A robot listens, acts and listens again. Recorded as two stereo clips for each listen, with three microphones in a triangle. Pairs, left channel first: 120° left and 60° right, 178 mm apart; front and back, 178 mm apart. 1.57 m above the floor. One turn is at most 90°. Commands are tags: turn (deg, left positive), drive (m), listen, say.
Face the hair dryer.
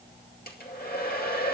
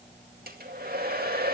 <turn deg="90"/>
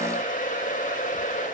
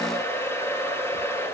<turn deg="75"/>
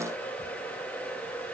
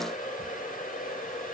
<turn deg="40"/>
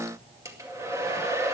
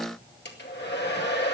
<turn deg="15"/>
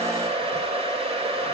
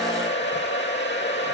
<say>Found it: a hair dryer, straight ahead.</say>